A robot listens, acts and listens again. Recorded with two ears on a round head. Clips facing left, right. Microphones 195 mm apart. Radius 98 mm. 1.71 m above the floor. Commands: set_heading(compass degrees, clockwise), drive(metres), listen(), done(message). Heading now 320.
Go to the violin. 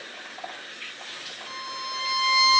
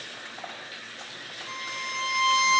set_heading(290)
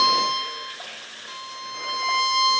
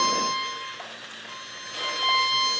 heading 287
set_heading(172)
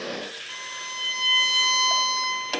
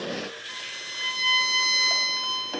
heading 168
drive(1.0)
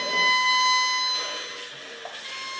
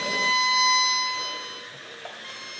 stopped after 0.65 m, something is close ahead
done("Blocked. The violin is further on, straight ahead.")